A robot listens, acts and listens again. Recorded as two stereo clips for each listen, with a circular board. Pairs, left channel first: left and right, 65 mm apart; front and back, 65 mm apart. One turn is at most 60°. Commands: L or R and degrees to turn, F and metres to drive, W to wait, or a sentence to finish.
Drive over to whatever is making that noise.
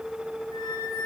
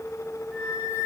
L60
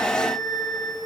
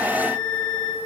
L60
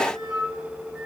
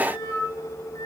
R10
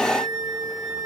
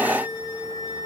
F1.0
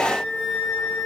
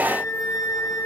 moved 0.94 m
R10
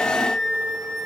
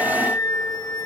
F1.0
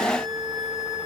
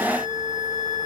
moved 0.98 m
F1.0
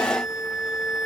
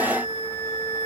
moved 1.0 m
R10
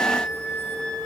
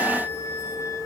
F1.0
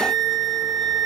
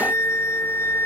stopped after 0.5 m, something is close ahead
Arrived at the flute, straight ahead.